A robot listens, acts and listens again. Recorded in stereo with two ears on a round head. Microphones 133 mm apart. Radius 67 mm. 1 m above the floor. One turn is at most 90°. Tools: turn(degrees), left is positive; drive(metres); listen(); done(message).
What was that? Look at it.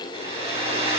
turn(degrees=-40)
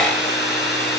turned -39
done("Found it: a hair dryer, straight ahead, over 4 m away.")